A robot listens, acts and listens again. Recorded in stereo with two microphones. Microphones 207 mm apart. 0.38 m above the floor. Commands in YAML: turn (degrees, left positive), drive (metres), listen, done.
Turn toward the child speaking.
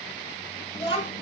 turn: 25
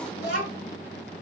turn: 125
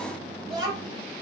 turn: -20
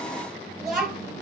done: "Facing the child speaking, 1 to 2 m away."